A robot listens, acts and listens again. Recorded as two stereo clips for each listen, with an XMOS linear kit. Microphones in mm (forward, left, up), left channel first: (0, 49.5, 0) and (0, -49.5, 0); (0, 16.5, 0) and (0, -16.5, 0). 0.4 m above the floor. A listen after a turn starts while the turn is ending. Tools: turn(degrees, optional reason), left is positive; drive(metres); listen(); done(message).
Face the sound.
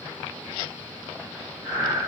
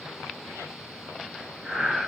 turn(degrees=-35, reason="The breathing: about 35° right or 145° right.")
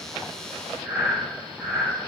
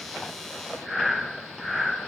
turn(degrees=-10, reason="So it is at 10° right.")
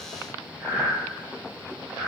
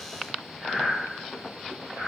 done("Found it: breathing, straight ahead, 1 to 2 m away.")